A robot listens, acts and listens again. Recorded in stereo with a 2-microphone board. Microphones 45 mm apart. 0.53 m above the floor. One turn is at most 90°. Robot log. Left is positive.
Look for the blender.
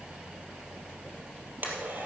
note: The blender: about 45° right or 135° right.
cmd yaw -45
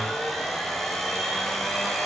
end: Facing the blender, 2 to 4 m away.